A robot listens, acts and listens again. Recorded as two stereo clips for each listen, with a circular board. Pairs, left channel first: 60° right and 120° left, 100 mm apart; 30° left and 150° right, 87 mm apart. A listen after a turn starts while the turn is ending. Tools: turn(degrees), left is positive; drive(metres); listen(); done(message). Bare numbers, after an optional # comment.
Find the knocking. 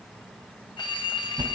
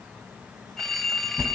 listen()
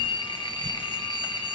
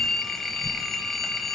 listen()
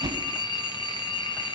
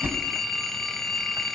done("I can't make out knocking, only a phone ringing and a whoosh.")